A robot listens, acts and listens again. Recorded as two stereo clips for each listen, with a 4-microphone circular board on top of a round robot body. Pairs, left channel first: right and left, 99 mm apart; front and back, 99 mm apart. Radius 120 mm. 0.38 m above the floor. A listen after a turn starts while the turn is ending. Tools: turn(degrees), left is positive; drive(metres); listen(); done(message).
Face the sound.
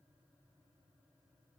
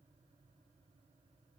listen()
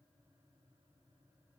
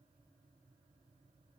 listen()
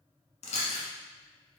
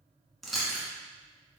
turn(degrees=-90)
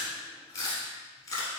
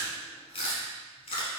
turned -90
turn(degrees=-30)
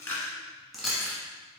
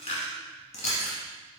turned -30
done("Found it: chewing, straight ahead, 1 to 2 m away.")